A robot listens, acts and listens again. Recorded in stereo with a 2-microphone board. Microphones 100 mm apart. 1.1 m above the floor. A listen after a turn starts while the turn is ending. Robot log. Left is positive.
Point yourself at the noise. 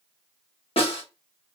note: The snare drum: about 70° left or 110° left.
cmd yaw +70
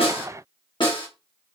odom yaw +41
note: So it is at 55° left.
cmd yaw +55
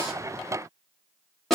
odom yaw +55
end: Found it: a snare drum, straight ahead, 1 to 2 m away.